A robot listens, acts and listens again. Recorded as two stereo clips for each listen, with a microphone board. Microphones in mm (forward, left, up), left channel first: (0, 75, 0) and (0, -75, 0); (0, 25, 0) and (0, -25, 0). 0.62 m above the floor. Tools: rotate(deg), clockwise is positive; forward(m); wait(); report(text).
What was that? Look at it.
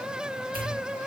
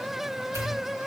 rotate(90)
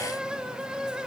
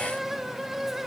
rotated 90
report("Facing where the pop came from. I can't hear it now.")